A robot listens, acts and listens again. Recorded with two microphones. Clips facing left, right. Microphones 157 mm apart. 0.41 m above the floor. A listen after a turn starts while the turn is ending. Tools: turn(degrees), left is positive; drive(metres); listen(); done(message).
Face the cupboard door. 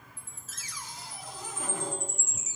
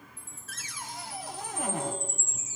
turn(degrees=-65)
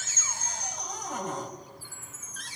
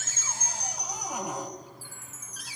turn(degrees=-10)
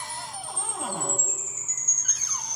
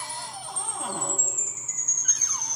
listen()
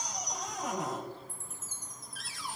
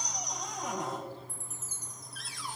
done("Facing the cupboard door.")